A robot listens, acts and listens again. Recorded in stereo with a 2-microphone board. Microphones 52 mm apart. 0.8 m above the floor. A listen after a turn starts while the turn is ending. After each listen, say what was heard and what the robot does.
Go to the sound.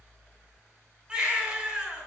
The baby crying: about 15° right or 165° right. Turn 15° right.
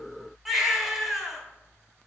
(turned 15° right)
Drive 1.0 m forward.
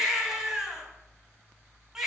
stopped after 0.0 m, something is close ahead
The baby crying is now 10° right. Turn 10° right.
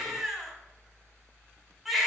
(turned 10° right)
Blocked. The baby crying is further on, straight ahead.